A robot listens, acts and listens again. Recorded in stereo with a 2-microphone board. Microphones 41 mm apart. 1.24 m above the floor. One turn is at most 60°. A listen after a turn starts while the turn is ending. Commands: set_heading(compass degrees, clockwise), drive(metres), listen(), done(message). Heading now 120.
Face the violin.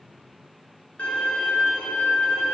set_heading(85)
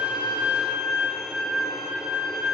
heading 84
done("Facing the violin, 1 to 2 m away.")